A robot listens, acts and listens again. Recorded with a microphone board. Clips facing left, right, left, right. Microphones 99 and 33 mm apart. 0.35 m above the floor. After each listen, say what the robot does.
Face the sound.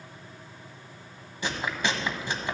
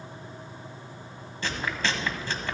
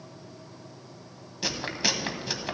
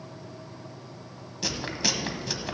Turn 15° left.
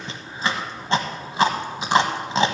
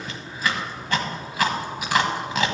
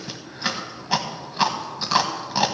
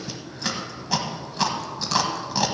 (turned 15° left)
Turn 150° left.
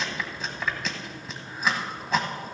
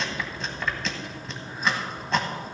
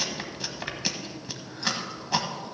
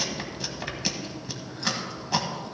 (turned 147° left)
Facing the chewing.